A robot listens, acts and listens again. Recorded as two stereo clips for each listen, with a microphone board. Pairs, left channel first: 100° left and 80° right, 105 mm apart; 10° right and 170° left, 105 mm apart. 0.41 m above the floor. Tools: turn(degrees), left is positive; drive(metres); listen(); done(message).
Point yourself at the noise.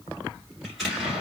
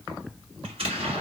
turn(degrees=-170)
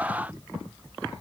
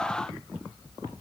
done("Facing where the explosion came from. I can't hear it now.")